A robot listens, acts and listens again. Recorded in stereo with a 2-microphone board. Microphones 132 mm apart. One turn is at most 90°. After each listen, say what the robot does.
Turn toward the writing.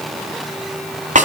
Keep listening.
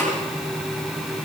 Keep listening.
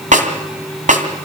I can't make out writing, only a snare drum.